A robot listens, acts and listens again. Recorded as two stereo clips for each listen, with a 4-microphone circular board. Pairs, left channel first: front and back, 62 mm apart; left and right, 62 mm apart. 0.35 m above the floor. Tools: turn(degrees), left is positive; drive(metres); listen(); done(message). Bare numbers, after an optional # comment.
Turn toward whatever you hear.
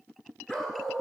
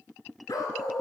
# The dog barking: 85° left.
turn(85)
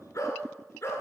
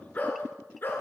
# The dog barking is now 40° left.
turn(40)
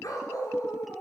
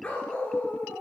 # The dog barking is now 30° left.
turn(30)
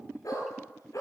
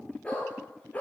# The dog barking is now 25° left.
turn(25)
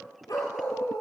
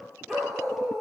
done("Facing the dog barking.")